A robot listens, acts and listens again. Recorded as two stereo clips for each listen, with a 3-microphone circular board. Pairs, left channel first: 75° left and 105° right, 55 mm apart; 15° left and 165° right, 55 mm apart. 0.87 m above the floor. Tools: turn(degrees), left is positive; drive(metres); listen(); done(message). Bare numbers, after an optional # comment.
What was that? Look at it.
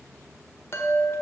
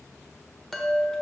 # The chime: 100° left.
turn(100)
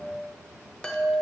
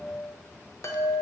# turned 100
done("Found it: a chime, straight ahead.")